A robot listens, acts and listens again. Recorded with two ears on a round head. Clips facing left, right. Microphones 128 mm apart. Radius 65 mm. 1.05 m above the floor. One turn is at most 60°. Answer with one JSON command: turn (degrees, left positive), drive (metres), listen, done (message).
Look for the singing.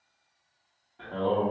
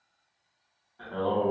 {"turn": 30}
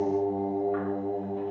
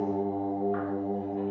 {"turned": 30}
{"turn": -30}
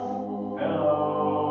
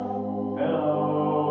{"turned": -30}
{"turn": -60}
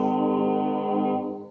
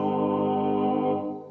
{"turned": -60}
{"turn": -30}
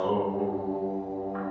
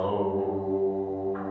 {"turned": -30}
{"done": "Found it: singing, straight ahead."}